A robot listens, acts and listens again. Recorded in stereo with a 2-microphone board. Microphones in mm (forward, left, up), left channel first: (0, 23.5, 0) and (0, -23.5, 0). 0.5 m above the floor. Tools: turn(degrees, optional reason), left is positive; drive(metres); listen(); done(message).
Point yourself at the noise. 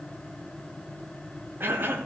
turn(degrees=-45, reason="The cough: about 45° right or 135° right.")
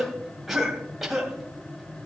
done("Facing the cough.")